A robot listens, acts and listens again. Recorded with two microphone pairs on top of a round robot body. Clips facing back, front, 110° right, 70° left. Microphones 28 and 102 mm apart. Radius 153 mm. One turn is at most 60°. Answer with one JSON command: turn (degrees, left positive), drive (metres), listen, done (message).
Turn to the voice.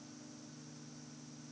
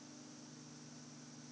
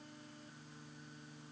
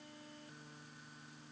{"listen": true}
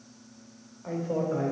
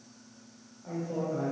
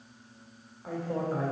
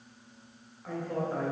{"turn": 60}
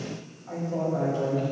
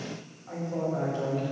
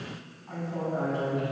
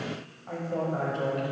{"turn": 60}
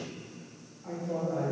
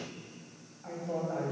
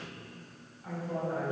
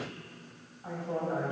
{"turn": 10}
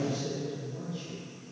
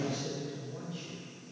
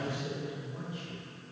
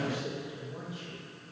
{"done": "Facing the man speaking."}